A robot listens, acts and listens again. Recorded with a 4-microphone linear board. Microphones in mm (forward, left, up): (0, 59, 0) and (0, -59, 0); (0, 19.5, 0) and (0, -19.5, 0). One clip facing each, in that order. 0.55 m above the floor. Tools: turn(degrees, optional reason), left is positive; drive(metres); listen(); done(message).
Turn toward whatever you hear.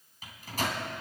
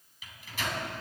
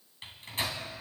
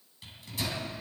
turn(degrees=40, reason="The microwave: about 40° left or 140° left.")
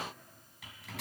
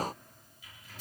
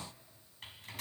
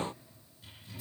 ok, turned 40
turn(degrees=100, reason="So it is at 100° left.")
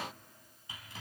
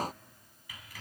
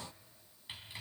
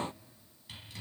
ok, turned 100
turn(degrees=25, reason="The microwave is now 25° left.")
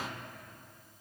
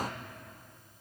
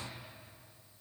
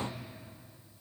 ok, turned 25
listen()
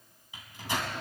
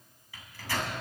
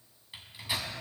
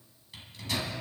turn(degrees=20, reason="The microwave is now 20° left.")
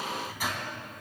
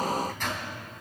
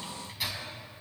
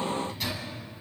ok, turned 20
turn(degrees=10, reason="The microwave is now 10° left.")
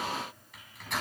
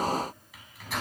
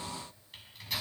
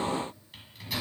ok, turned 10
done("Facing the microwave.")